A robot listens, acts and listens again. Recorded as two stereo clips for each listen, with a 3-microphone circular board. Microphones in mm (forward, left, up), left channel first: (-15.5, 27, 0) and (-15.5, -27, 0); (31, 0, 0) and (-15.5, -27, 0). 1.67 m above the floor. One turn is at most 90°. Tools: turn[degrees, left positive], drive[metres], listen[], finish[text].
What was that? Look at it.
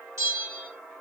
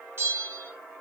Thought: The bell: 110° right.
Action: turn[-90]
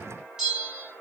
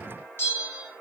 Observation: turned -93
Thought: The bell is now 15° right.
Action: turn[-15]
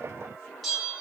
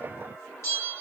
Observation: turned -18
Action: finish[Facing the bell.]